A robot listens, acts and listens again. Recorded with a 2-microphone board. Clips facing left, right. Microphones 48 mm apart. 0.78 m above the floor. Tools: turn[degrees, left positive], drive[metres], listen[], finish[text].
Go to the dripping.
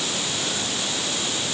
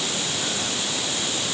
Action: listen[]
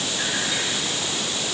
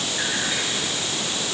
Action: listen[]
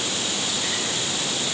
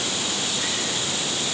Action: finish[I can't make out dripping to turn to.]